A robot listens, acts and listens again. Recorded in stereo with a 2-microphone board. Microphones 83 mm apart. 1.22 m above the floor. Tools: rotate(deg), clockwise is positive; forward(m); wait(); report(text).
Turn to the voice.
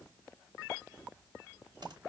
wait()
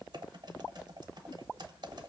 wait()
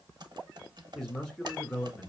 rotate(-30)
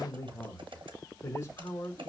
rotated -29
rotate(-140)
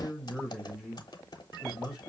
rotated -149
rotate(10)
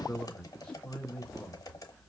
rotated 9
report("Found it: a man speaking, straight ahead.")